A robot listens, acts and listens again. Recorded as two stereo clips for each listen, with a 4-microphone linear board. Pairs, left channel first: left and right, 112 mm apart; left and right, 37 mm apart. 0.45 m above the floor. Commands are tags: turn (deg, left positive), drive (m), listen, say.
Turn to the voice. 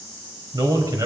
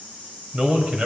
<turn deg="-35"/>
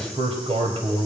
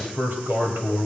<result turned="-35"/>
<turn deg="-105"/>
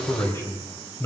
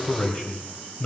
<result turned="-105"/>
<turn deg="30"/>
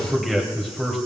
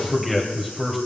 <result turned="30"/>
<say>Found it: a man speaking, straight ahead.</say>